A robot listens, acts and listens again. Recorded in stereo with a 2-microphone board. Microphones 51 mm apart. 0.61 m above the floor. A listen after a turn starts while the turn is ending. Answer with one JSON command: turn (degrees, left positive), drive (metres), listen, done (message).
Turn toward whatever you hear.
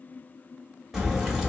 {"turn": -30}
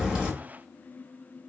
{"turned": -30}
{"listen": true}
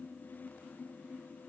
{"done": "I heard a crack, but can't make it out now. It was about 20° left or 140° right."}